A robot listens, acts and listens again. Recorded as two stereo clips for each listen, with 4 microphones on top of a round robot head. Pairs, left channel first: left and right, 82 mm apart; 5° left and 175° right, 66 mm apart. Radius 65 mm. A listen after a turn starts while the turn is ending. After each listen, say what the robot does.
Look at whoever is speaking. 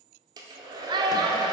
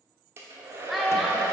Turn 90° right.
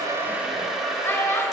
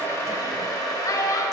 Turn 30° left.
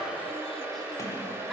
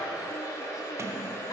Keep listening.
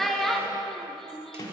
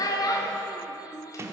Facing the child speaking.